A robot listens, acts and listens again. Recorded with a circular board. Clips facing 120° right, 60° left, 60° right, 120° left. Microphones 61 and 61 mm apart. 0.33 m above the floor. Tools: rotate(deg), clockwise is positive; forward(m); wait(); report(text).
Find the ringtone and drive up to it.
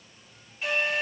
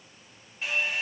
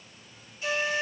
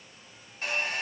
wait()
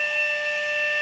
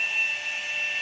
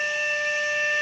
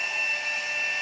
wait()
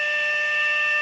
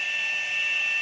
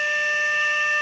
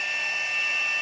report("I can't make out a ringtone, only a flute.")